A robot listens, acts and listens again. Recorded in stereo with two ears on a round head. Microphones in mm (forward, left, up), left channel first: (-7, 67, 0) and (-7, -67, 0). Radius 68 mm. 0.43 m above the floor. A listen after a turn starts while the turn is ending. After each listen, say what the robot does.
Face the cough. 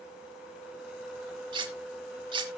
Keep listening.
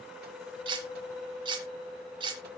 Keep listening.
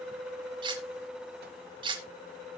I can't make out a cough to turn to.